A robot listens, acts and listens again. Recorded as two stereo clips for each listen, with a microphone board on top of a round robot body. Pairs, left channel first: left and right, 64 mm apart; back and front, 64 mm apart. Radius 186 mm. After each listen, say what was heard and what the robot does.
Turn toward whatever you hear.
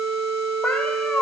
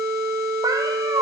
The cat meowing: 15° left. Turn 15° left.
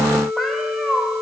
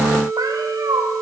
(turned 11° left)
Found it: a cat meowing, straight ahead.